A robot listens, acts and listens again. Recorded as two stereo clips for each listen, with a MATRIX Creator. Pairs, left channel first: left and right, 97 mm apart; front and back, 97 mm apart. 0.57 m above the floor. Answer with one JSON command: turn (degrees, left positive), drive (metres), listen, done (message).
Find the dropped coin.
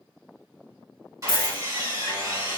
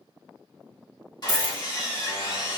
{"turn": -95}
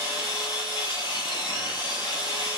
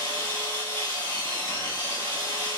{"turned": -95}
{"done": "I heard a dropped coin from this way, but can't make it out now."}